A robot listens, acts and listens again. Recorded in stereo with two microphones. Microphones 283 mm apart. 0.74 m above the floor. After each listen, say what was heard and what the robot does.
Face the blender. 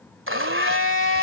The blender: about 45° right or 135° right. Turn 45° right.
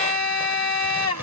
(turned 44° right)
So it is at 90° right. Turn 90° right.
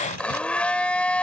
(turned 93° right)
Facing the blender.